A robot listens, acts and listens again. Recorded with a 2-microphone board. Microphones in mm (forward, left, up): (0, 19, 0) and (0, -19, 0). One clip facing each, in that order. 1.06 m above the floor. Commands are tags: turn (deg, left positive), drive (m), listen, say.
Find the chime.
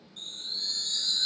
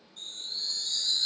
<turn deg="45"/>
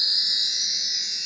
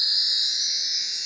<say>Found it: a chime, straight ahead, under 1 m away.</say>